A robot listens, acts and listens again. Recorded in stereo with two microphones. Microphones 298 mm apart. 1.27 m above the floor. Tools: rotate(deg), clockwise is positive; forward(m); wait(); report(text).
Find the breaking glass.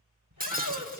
rotate(30)
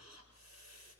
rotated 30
wait()
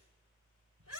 report("I heard breaking glass, but can't make it out now. It was about straight ahead or 120° right.")